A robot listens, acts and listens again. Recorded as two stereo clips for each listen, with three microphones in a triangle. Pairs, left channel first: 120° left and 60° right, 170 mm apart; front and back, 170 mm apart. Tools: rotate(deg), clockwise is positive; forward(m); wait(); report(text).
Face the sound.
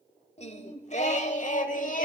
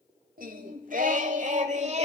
rotate(-140)
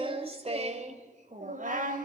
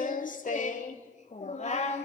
rotate(40)
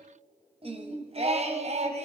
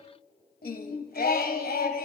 rotate(15)
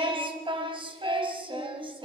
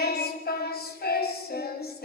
report("Facing the singing, 2 to 4 m away.")